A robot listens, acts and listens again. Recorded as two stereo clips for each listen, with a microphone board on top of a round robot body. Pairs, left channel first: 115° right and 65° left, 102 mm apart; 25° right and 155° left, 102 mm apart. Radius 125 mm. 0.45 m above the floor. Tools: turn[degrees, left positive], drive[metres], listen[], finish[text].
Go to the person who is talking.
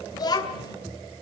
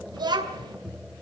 Thought: The child speaking: 160° right.
Action: turn[-160]
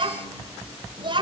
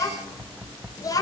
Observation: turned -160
Thought: The child speaking is now 30° left.
Action: turn[30]
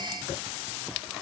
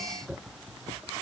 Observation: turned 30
Action: listen[]
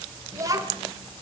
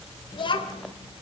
Thought: The child speaking is now 10° left.
Action: turn[10]
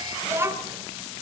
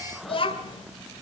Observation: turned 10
Action: drive[1.0]
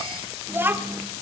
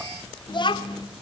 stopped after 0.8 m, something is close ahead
Action: finish[Arrived at the child speaking, straight ahead.]